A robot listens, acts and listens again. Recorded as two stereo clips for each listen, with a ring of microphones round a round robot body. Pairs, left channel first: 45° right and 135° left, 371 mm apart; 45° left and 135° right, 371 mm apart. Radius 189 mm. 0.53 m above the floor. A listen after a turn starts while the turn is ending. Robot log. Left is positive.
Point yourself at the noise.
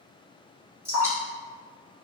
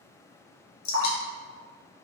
note: The dripping: 50° left.
cmd yaw +50
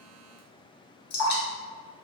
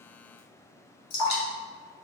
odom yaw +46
end: Found it: dripping, straight ahead.